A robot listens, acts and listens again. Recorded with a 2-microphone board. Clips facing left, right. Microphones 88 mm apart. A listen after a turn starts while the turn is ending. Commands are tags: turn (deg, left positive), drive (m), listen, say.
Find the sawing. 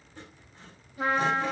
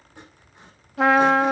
<turn deg="-15"/>
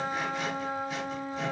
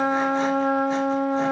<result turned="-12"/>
<listen/>
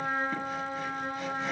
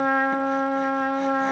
<listen/>
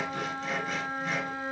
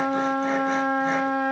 <say>I heard sawing, but can't make it out now. It was about 5° right or 150° right.</say>